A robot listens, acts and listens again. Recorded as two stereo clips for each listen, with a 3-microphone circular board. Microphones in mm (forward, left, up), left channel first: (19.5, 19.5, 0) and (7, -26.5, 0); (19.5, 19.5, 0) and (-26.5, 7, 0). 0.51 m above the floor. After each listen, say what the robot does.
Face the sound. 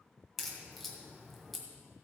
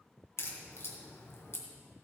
Turn 10° right.
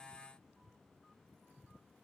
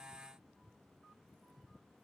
Facing where the crack came from. I can't hear it now.